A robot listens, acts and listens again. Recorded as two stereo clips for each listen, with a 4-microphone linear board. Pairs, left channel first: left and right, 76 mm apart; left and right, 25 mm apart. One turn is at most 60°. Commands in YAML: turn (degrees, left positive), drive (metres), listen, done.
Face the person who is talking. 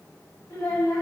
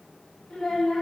turn: 45
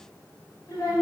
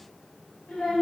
turn: 60
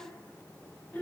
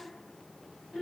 turn: 30
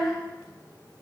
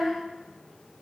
turn: -10
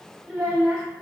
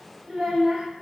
done: "Found it: a child speaking, straight ahead, 1 to 2 m away."